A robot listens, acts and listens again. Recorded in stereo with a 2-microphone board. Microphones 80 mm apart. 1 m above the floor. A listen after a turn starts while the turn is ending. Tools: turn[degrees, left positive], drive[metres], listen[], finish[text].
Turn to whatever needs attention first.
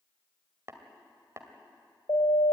Thought: The siren: about 70° left or 110° left.
Action: turn[70]
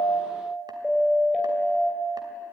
Action: finish[Found it: a siren, straight ahead.]